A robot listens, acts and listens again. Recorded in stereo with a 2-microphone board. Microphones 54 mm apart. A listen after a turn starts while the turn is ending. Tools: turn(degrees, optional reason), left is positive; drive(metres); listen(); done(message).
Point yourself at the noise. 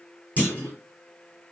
turn(degrees=30, reason="The clunk: about 30° left or 150° left.")
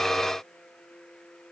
listen()
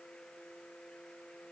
done("I heard a clunk, but can't make it out now. It was about straight ahead or 120° left.")